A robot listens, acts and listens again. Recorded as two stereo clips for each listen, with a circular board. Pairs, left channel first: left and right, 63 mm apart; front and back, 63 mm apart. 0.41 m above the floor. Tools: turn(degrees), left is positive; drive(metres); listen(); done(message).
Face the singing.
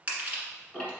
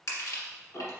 listen()
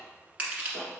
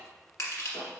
listen()
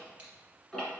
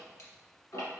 done("I can't make out singing, only ticking and crushing.")